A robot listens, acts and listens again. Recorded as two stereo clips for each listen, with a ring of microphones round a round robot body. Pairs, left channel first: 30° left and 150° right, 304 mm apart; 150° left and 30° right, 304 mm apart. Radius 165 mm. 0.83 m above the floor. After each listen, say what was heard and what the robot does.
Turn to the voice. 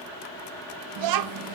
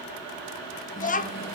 The child speaking: 145° right. Turn 145° right.
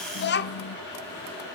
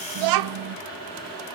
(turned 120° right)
The child speaking is now 25° right. Turn 25° right.
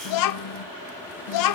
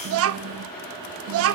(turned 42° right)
The child speaking is now 15° left. Turn 15° left.
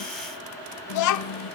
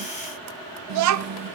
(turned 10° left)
Found it: a child speaking, straight ahead, under 1 m away.